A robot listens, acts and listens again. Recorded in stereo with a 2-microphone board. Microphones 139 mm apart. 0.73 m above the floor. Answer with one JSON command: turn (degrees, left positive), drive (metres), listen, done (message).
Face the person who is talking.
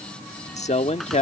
{"turn": 55}
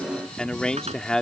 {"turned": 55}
{"done": "Facing the man speaking."}